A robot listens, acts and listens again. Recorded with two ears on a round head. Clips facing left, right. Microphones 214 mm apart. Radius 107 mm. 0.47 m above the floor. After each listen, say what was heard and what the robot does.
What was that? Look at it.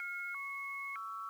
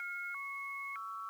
Keep listening.
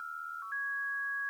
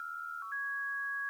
Keep listening.
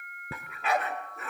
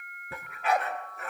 The dog barking: about 75° left or 105° left. Turn 75° left.
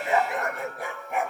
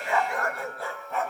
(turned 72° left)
So it is at 15° left. Turn 15° left.
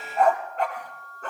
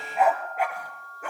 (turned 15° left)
The dog barking is now 10° right. Turn 10° right.
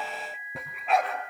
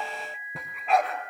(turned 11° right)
Facing the dog barking, 2 to 4 m away.